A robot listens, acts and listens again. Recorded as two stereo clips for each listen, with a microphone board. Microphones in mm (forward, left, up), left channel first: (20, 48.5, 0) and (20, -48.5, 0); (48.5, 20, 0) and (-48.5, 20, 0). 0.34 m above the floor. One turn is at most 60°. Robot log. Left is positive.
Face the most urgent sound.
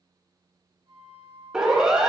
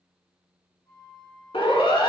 end: Facing the siren, over 4 m away.